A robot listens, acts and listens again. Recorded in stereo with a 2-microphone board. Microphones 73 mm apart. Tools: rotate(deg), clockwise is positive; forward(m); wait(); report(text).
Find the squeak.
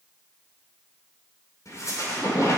rotate(-50)
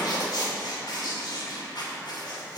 rotate(-80)
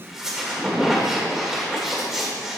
report("Facing the squeak.")